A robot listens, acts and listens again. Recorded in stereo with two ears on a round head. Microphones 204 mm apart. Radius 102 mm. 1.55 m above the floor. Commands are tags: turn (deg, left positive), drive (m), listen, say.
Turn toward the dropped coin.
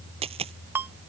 <turn deg="-25"/>
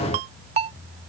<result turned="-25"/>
<listen/>
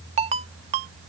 <say>I heard a dropped coin, but can't make it out now. It was about straight ahead or 130° right.</say>